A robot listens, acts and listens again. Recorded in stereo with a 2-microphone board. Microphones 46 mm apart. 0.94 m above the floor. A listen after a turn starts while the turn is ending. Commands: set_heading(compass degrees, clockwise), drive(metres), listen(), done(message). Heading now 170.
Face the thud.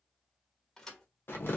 set_heading(140)
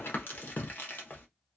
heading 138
listen()
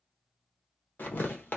done("I heard a thud, but can't make it out now. It was about 20° right or 135° left.")